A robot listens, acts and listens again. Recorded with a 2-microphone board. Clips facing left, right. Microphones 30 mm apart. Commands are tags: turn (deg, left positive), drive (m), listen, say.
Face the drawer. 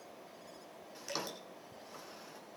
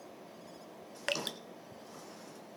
<turn deg="30"/>
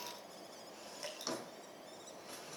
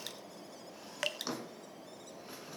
<turn deg="-15"/>
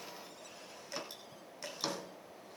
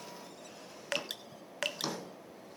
<say>Found it: a drawer, straight ahead, 2 to 4 m away.</say>